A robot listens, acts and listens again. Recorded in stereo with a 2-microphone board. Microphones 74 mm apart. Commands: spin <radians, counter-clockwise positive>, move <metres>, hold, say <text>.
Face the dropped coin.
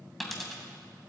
spin 0.52
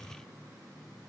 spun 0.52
hold
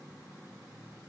say I heard a dropped coin, but can't make it out now. It was about 30° right or 150° left.